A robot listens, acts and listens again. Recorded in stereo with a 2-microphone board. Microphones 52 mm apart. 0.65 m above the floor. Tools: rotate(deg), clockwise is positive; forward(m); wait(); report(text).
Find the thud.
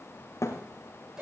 rotate(-90)
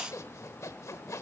report("Facing where the thud came from. I can't hear it now.")